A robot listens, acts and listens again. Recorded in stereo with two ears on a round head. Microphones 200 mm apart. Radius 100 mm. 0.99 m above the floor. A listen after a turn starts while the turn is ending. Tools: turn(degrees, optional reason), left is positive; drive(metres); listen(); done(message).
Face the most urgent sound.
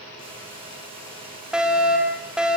turn(degrees=-30)
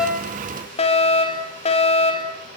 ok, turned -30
turn(degrees=30, reason="So it is at 30° left.")
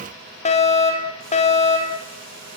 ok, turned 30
turn(degrees=30, reason="The fire alarm is now 30° left.")
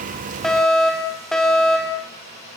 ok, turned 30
done("Found it: a fire alarm, straight ahead, over 4 m away.")